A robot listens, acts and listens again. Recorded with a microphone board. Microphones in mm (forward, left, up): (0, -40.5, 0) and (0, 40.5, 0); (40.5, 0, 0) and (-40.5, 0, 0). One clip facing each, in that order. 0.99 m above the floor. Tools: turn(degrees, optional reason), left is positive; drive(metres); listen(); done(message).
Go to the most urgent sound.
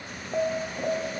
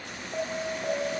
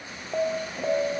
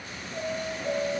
turn(degrees=-15, reason="The alarm: 15° right.")
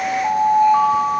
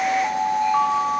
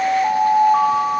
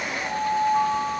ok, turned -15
turn(degrees=-10, reason="The alarm is now 10° right.")
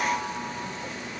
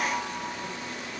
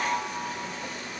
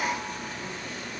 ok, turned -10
listen()
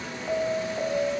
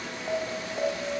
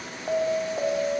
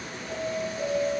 drive(metres=1.0)
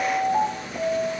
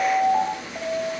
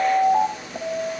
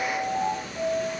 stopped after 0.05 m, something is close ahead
done("Blocked. The alarm is further on, straight ahead.")